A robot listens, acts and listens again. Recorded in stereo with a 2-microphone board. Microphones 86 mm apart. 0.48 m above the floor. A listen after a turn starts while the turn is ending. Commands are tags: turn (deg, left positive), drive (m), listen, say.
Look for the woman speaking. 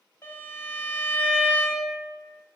<listen/>
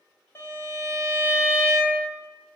<listen/>
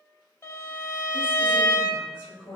<turn deg="35"/>
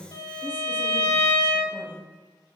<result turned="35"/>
<turn deg="120"/>
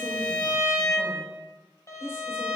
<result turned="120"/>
<turn deg="30"/>
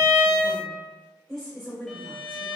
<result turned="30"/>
<say>Facing the woman speaking.</say>